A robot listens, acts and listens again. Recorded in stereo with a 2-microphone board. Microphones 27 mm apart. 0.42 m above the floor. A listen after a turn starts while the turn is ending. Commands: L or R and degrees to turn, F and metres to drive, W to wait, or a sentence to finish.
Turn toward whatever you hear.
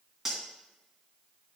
R30
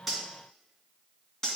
L20
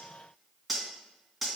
Facing the cutlery clinking, 2 to 4 m away.